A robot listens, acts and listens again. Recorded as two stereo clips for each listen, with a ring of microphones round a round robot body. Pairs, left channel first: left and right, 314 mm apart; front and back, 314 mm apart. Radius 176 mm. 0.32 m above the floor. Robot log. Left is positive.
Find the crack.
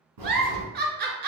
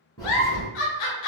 note: The crack: 80° right.
cmd yaw -80
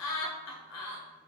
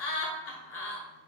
end: I heard a crack from this way, but can't make it out now.